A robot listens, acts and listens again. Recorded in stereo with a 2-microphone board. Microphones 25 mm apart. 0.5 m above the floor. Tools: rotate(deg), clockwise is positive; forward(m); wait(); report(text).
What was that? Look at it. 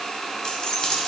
rotate(-35)
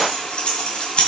rotate(-130)
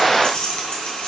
rotate(-45)
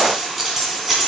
rotate(20)
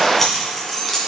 report("Facing the keys jangling.")